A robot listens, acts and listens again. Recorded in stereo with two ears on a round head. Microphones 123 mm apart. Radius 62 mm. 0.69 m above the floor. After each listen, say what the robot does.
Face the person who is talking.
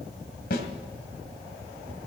Keep listening.
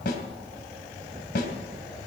Keep listening.
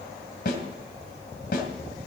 I can't make out anyone speaking to turn to.